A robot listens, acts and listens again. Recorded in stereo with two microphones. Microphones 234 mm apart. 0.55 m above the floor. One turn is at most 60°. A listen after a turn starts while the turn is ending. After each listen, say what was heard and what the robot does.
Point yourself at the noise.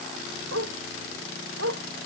Turn 60° right.
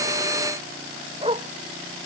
So it is at 25° right. Turn 25° right.
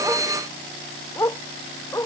The dog barking is now 15° left. Turn 15° left.
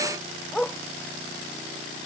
Found it: a dog barking, straight ahead.